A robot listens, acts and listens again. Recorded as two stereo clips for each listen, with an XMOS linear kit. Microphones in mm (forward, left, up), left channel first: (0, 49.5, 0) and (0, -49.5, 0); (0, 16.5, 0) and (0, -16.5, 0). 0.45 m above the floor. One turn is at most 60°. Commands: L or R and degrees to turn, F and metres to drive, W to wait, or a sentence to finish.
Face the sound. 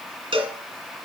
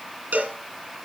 R60
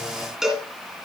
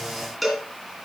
Facing the cowbell.